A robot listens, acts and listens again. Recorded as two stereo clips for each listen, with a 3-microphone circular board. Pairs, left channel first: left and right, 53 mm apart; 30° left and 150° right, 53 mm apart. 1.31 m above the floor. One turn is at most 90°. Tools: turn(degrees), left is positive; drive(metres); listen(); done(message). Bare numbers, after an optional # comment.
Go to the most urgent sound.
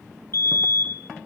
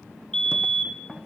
# The fire alarm: 105° left.
turn(90)
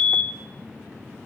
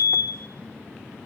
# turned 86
# The fire alarm is now 20° left.
turn(20)
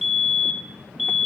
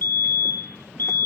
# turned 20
drive(1.0)
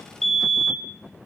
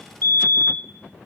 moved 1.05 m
drive(1.0)
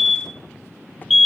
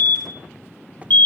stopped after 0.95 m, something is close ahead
done("Arrived at the fire alarm, straight ahead.")